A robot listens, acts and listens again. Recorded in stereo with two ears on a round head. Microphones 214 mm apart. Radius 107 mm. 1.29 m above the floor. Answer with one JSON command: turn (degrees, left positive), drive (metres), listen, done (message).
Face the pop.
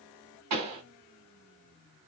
{"turn": -90}
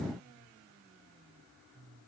{"done": "Facing where the pop came from. I can't hear it now."}